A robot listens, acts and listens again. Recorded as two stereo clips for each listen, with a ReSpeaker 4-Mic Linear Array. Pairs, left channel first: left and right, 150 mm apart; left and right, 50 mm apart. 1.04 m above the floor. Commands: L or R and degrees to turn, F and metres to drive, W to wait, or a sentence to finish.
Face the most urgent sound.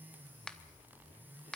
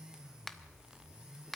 W
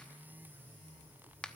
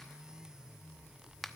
W
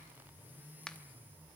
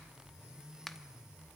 I can't make out anything urgent to turn to.